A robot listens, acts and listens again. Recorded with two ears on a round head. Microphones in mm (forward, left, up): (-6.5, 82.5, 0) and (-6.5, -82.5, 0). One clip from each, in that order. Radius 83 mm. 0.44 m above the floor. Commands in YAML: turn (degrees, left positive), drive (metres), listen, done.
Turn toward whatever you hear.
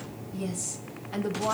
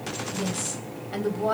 turn: -30
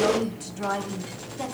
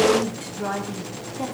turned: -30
turn: 15
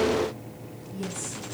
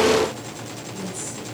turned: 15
turn: -10
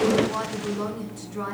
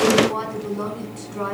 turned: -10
done: "Found it: a woman speaking, straight ahead, 2 to 4 m away."